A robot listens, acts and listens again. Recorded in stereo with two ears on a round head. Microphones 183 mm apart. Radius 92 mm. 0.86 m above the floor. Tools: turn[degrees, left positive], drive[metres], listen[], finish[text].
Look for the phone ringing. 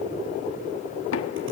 Action: listen[]
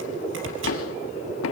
Action: listen[]
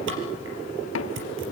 Action: finish[I can't make out a phone ringing to turn to.]